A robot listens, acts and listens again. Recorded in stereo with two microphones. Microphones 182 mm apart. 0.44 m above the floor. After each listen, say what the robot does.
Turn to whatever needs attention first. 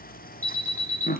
Turn 30° right.
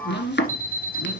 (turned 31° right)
Turn 15° left.
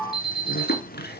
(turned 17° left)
Facing the alarm.